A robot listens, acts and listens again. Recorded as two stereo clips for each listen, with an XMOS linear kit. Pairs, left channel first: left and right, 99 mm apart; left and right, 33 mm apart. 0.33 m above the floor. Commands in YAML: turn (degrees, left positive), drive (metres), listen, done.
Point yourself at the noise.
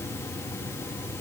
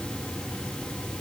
listen: true
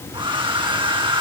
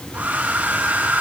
turn: -60
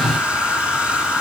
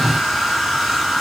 turn: -10
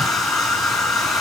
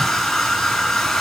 done: "Facing the hair dryer, 2 to 4 m away."